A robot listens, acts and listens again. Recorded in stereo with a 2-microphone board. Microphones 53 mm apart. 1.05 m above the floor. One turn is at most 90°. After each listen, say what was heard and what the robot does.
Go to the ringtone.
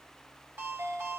The ringtone: about 55° right or 125° right. Turn 55° right.
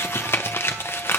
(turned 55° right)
Keep listening.
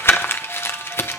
Keep listening.
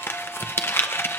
I heard a ringtone, but can't make it out now. It was about straight ahead or 70° right. I did not reach it.